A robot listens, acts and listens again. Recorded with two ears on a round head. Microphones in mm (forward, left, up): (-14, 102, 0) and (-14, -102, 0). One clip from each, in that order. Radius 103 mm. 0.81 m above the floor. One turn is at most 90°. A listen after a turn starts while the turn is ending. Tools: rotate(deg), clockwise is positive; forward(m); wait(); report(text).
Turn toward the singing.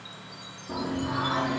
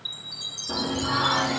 rotate(55)
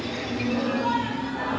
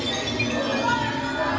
report("Facing the singing.")